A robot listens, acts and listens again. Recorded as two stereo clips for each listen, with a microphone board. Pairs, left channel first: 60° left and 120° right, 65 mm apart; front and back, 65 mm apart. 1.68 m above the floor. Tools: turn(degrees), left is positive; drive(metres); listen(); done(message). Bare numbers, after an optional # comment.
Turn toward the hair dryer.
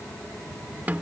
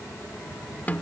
listen()
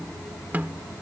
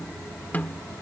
listen()
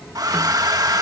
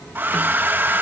# The hair dryer: 125° right.
turn(-125)
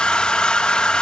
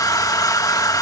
# The hair dryer is now 15° right.
turn(-15)
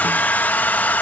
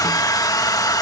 done("Facing the hair dryer.")